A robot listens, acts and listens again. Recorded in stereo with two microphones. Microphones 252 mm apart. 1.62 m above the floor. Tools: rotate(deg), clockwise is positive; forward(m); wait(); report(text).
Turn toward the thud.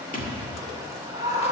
rotate(-35)
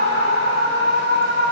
wait()
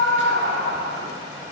report("I heard a thud, but can't make it out now. It was about straight ahead or 110° left.")